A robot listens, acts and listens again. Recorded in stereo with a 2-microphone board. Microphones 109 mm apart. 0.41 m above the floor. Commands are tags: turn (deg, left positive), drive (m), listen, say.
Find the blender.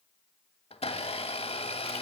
<turn deg="60"/>
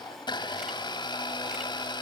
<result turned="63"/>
<turn deg="45"/>
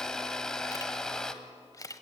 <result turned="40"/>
<say>Facing the blender, 1 to 2 m away.</say>